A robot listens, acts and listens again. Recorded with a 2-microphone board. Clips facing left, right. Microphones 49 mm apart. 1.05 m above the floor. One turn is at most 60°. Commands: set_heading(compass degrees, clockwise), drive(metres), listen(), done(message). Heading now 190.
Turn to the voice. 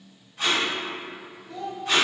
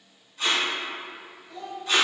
set_heading(130)
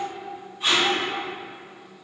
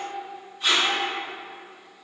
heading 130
set_heading(75)
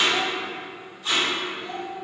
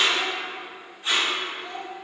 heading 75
done("Facing the child speaking, under 1 m away.")